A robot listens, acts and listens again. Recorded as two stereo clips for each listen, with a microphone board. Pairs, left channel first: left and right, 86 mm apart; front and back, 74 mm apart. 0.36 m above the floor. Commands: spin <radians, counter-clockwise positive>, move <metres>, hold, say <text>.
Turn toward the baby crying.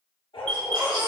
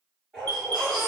spin -1.57
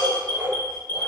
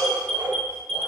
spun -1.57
hold
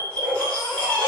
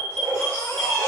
spin 0.35
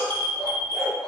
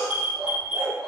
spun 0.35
hold
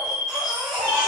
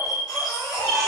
say Found it: a baby crying, straight ahead.